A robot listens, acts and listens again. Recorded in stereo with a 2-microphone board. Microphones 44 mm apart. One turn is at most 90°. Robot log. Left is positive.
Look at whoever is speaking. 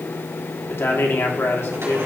note: The man speaking: about 70° left or 110° left.
cmd yaw +70
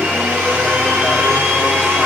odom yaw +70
cmd idle
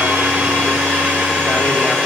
cmd idle
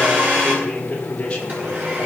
note: So it is at 25° left.
cmd yaw +25
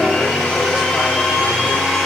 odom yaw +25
cmd idle
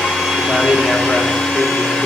cmd idle
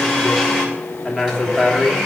end: Facing the man speaking, 2 to 4 m away.